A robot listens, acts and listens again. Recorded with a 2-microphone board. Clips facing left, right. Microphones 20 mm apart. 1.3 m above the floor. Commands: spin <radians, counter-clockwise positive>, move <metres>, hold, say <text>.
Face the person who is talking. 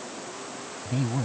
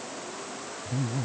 spin 1.05
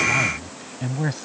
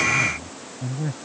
spin 1.05
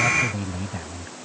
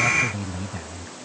say Found it: a man speaking, straight ahead.